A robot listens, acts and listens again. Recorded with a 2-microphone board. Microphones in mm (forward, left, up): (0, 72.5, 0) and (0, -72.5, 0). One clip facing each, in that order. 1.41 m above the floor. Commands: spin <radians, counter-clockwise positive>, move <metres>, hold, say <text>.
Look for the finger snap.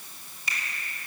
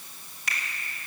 spin -1.22
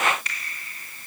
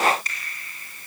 spin -0.70
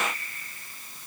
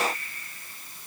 hold
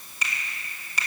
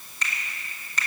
spin 0.17
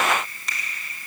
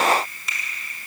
say Facing the finger snap, 2 to 4 m away.